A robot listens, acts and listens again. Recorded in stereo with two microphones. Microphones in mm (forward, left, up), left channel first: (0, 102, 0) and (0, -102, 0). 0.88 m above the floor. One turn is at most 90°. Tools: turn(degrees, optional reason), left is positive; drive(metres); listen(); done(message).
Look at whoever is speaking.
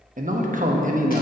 turn(degrees=-45, reason="The man speaking: about 45° right or 135° right.")
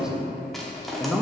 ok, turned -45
done("Found it: a man speaking, straight ahead, under 1 m away.")